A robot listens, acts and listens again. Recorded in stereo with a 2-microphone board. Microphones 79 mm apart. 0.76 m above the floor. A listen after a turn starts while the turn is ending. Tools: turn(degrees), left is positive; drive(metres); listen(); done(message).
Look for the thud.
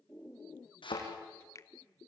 turn(degrees=90)
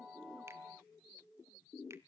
done("I heard a thud from this way, but can't make it out now.")